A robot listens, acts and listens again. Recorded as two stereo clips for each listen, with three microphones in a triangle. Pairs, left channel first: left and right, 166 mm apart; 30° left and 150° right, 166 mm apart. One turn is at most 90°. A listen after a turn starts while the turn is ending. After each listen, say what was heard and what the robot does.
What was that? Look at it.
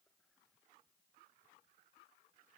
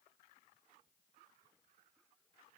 Keep listening.
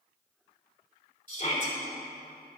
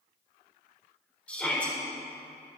The shout: 110° left. Turn 90° left.
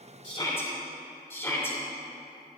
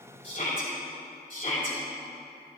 The shout is now 20° left. Turn 20° left.
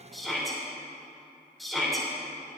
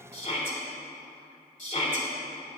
Found it: a shout, straight ahead.